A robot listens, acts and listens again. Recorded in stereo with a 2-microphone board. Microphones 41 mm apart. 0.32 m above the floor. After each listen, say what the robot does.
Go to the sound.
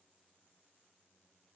Keep listening.
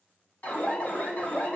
Turn 45° left.
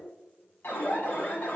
Turn 85° left.
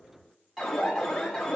Drive 1.0 m forward.
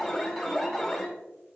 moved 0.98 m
Turn 10° right.
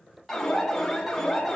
Drive 1.0 m forward.
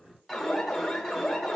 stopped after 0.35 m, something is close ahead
Arrived at the alarm, straight ahead.